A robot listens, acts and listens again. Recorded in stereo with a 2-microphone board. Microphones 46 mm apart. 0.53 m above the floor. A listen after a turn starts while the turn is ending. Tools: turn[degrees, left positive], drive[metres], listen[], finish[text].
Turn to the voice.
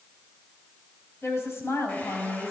Thought: The woman speaking: about 70° left or 110° left.
Action: turn[70]
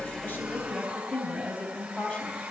Thought: So it is at 25° left.
Action: turn[25]
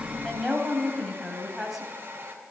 Action: finish[Found it: a woman speaking, straight ahead.]